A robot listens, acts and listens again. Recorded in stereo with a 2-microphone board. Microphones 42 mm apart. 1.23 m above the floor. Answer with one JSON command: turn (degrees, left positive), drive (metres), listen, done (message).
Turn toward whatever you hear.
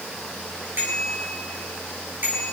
{"turn": -45}
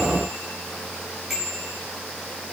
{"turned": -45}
{"done": "Found it: a bicycle bell, straight ahead."}